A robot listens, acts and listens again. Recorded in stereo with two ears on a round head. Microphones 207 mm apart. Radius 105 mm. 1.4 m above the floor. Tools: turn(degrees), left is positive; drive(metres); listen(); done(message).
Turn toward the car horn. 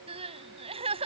listen()
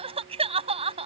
listen()
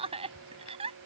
done("I can't make out a car horn, only crying.")